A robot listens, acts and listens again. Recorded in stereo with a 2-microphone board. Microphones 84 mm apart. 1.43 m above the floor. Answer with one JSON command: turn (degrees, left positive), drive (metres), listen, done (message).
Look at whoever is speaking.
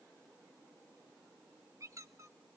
{"listen": true}
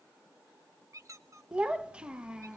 {"turn": -30}
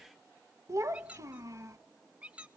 {"turn": -135}
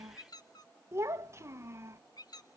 {"turn": -35}
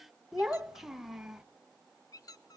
{"done": "Facing the child speaking."}